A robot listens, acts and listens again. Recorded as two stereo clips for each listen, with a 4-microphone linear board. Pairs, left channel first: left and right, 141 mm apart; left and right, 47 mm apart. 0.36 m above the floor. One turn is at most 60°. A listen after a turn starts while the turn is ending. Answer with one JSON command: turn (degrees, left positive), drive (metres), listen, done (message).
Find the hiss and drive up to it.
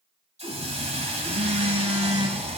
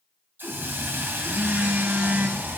{"turn": -50}
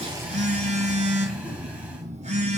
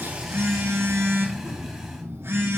{"listen": true}
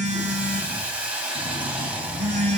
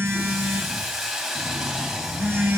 {"turn": -10}
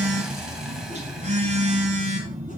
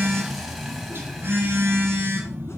{"listen": true}
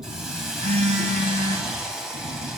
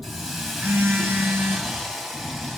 {"drive": 1.0}
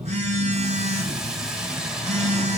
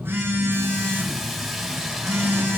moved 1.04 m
{"drive": 1.0}
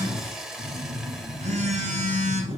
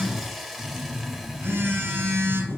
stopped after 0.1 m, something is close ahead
{"done": "Arrived at the hiss, straight ahead."}